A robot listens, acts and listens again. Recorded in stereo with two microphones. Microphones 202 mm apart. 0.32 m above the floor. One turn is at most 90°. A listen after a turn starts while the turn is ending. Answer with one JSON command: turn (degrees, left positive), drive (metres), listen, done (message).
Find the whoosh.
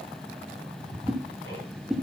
{"turn": 30}
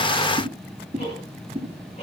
{"turn": -35}
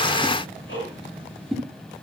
{"done": "Facing the whoosh."}